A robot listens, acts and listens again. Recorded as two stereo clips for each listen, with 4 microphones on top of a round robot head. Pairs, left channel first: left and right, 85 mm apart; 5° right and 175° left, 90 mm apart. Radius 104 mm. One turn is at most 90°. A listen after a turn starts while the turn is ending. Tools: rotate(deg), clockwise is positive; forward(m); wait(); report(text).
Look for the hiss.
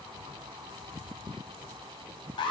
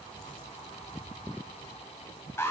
wait()
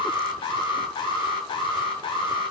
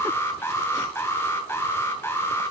wait()
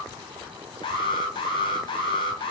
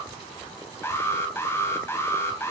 report("I can't make out a hiss, only an alarm.")